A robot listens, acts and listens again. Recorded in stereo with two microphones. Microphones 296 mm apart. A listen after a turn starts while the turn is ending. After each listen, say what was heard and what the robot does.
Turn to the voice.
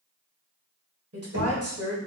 The woman speaking: about 55° right or 125° right. Turn 55° right.
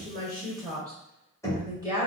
So it is at 15° right. Turn 15° right.
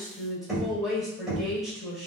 Found it: a woman speaking, straight ahead, 1 to 2 m away.